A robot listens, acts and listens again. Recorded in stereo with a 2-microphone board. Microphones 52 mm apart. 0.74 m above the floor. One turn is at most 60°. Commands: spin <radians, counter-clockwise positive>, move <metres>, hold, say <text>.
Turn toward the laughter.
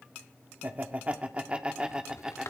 spin -0.52
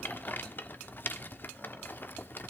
hold
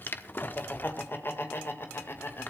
spin 0.96
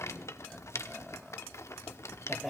say Found it: laughter, straight ahead, 2 to 4 m away.